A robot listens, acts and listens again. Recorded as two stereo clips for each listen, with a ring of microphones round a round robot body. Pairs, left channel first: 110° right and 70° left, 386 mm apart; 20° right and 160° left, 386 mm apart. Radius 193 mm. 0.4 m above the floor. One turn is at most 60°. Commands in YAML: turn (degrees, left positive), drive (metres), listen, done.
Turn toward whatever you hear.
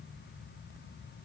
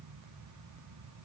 listen: true
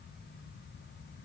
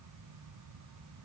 listen: true
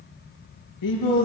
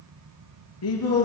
turn: -60
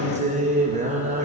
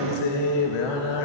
done: "Found it: singing, straight ahead, 2 to 4 m away."